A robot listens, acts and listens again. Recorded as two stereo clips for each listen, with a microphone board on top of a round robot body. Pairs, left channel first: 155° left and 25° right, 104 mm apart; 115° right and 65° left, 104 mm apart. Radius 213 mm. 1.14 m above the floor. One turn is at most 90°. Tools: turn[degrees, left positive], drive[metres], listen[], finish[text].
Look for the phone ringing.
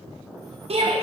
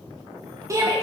Action: listen[]
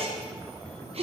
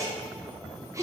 Action: listen[]
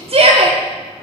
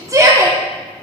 Action: finish[I can't make out a phone ringing to turn to.]